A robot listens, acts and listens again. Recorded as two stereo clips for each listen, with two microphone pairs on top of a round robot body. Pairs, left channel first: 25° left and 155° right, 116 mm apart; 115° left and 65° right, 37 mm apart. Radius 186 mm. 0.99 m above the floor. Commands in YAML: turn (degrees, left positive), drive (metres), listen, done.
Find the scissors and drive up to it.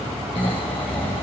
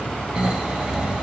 listen: true
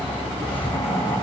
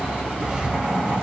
listen: true
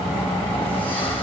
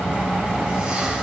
done: "I can't make out scissors to turn to."